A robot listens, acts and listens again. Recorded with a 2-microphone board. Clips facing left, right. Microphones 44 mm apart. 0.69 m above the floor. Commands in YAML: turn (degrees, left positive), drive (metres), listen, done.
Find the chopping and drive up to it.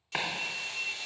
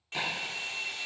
turn: 60
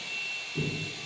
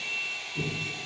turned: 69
turn: 50
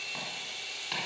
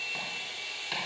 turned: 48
drive: 1.0
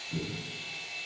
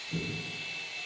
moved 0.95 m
drive: 1.0
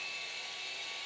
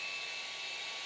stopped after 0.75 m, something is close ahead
listen: true
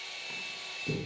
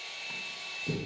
done: "I am next to the chopping."